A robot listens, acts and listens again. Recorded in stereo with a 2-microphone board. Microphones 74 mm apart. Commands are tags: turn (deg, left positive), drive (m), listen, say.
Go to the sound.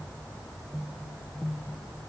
<listen/>
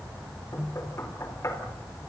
<turn deg="40"/>
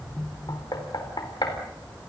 <turn deg="100"/>
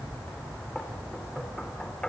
<turn deg="10"/>
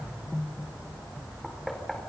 <drive m="1.0"/>
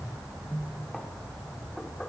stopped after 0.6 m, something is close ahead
<say>Blocked. The knocking is further on, straight ahead.</say>